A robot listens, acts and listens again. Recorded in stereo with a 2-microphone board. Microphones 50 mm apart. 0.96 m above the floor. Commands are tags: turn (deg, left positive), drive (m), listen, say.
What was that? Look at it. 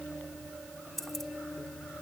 <turn deg="30"/>
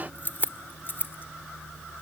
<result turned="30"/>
<turn deg="135"/>
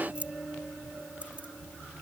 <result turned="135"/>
<turn deg="-25"/>
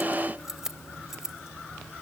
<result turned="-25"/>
<turn deg="-10"/>
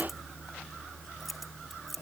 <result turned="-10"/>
<say>Found it: keys jangling, straight ahead.</say>